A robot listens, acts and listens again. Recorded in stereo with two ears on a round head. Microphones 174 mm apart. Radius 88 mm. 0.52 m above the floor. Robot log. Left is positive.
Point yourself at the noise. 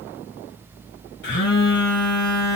note: The phone buzzing: about 65° left or 115° left.
cmd yaw +65
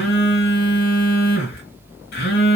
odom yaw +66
note: So it is at 50° left.
cmd yaw +50
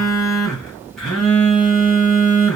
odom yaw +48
end: Facing the phone buzzing.